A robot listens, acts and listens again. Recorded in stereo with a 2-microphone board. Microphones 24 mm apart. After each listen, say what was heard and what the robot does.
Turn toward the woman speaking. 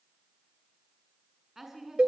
Turn 30° right.
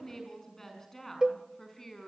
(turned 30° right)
So it is at 15° left. Turn 15° left.
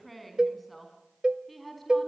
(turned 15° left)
Facing the woman speaking, over 4 m away.